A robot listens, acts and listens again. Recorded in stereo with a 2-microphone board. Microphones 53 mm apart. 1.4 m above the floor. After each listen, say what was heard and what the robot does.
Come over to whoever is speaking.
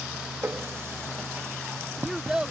Turn 30° right.
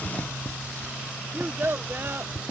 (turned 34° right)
So it is at 130° right. Turn 130° right.
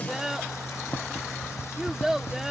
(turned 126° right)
Drive 1.0 m forward.
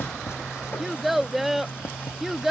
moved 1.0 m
Drive 1.0 m forward.
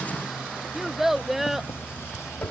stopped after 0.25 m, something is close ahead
Arrived at the child speaking, straight ahead.